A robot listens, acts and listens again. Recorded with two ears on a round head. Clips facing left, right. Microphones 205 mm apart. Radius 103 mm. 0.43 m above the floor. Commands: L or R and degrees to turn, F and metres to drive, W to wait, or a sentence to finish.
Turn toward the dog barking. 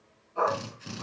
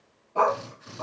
R70
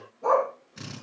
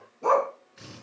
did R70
R40
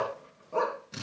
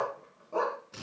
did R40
Found it: a dog barking, straight ahead, 1 to 2 m away.